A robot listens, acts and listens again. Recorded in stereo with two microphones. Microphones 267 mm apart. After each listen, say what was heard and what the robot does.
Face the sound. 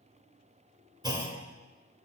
The clunk: about 15° right or 165° right. Turn 15° right.
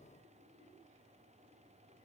Keep listening.
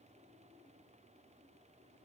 I heard a clunk, but can't make it out now. It was about straight ahead or 150° right.